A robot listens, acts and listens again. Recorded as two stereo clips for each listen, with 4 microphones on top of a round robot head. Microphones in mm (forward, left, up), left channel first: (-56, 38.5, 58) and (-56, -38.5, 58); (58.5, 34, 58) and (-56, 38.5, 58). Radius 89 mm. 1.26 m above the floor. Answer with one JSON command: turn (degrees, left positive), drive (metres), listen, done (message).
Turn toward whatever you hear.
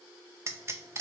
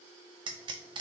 {"turn": -140}
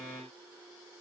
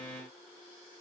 {"done": "I heard a pop from this way, but can't make it out now."}